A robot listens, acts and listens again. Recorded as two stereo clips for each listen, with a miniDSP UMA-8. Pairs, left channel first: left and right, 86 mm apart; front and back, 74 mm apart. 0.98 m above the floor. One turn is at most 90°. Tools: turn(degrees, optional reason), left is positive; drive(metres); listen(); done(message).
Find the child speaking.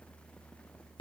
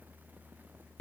listen()
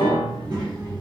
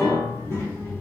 turn(degrees=-55, reason="The child speaking: 55° right.")
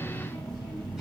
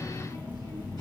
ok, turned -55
turn(degrees=-10, reason="The child speaking is now 10° right.")
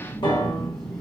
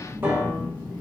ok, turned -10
done("Found it: a child speaking, straight ahead, 1 to 2 m away.")